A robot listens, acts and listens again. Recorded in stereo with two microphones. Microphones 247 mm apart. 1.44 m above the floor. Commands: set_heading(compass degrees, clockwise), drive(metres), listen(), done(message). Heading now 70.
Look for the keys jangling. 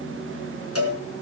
listen()
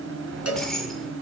set_heading(40)
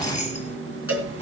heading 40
set_heading(245)
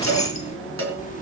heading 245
set_heading(215)
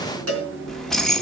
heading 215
done("Found it: keys jangling, straight ahead, 1 to 2 m away.")